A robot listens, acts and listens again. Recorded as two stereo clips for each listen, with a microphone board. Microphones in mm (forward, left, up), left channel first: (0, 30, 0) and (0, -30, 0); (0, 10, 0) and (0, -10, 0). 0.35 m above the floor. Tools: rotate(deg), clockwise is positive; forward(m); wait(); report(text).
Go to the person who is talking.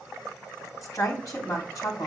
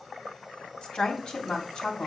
rotate(-60)
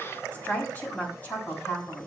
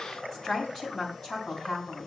rotate(-40)
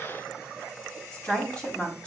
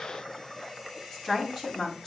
rotate(-20)
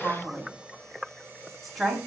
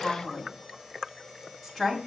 forward(1.0)
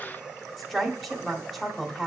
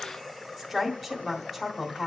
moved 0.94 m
forward(1.0)
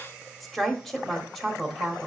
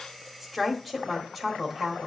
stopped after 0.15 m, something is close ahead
rotate(-10)
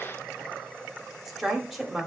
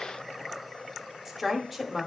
report("Arrived at the woman speaking, straight ahead.")